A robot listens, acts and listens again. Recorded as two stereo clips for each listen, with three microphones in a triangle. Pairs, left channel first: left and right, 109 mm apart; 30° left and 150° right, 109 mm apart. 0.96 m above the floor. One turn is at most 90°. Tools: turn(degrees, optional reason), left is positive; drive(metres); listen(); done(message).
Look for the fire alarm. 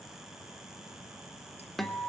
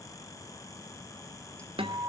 listen()
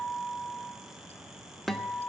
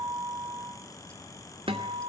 listen()
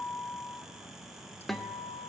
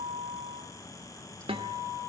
done("I can't make out a fire alarm to turn to.")